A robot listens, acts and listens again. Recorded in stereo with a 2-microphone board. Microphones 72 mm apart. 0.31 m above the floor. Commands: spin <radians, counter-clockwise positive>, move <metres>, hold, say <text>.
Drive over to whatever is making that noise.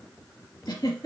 spin 1.05
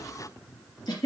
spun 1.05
spin 1.05
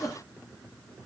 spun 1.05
spin 0.17
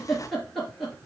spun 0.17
move 1.0
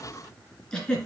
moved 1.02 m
spin 0.17
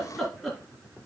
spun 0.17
move 1.0
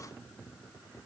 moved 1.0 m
hold
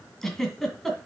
move 1.0
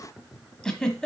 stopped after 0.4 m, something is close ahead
spin 0.17
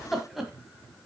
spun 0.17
say I am next to the giggle.